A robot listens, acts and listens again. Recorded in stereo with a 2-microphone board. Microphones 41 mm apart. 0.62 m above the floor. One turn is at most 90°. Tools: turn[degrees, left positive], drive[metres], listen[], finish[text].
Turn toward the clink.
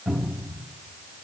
Action: listen[]
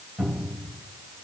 Action: listen[]
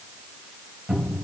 Action: finish[I can't make out a clink to turn to.]